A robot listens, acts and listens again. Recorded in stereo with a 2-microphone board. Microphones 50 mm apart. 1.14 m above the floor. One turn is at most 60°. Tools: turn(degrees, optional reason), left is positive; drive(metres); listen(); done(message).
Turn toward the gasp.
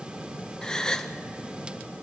turn(degrees=30)
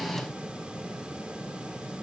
listen()
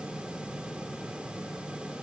done("I heard a gasp, but can't make it out now. It was about 15° right or 135° left.")